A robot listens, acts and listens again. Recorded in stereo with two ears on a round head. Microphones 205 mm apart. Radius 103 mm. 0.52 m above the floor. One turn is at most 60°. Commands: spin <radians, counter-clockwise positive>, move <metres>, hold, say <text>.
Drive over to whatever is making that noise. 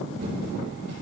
spin -0.87
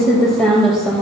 move 1.0
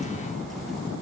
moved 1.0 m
hold
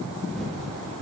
move 1.0
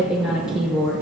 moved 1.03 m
move 1.0
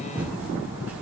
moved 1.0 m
spin -0.17
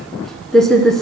move 1.0
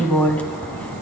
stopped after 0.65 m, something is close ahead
say Arrived at the typing on a keyboard, straight ahead.